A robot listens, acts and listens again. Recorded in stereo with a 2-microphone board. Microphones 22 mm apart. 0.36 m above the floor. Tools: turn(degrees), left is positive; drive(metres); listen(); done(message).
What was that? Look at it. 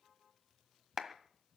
turn(degrees=-30)
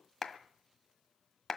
turn(degrees=15)
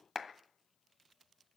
done("Facing the clap, 1 to 2 m away.")